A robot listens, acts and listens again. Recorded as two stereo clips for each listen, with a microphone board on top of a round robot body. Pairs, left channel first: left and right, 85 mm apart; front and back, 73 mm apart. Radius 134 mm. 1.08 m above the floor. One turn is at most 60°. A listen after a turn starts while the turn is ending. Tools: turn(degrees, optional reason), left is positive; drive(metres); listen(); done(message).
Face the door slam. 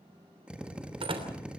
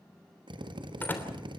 turn(degrees=-60, reason="The door slam: 65° right.")
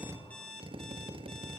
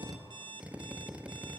done("I heard a door slam from this way, but can't make it out now.")